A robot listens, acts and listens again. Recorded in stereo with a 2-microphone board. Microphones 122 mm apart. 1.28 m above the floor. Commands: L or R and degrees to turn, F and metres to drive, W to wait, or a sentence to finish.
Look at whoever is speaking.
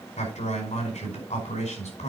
L90
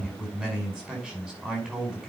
Found it: a man speaking, straight ahead.